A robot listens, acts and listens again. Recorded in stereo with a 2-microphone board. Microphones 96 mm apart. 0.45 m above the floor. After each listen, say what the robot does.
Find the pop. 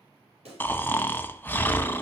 Turn 90° right.
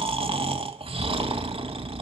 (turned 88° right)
I heard a pop from this way, but can't make it out now.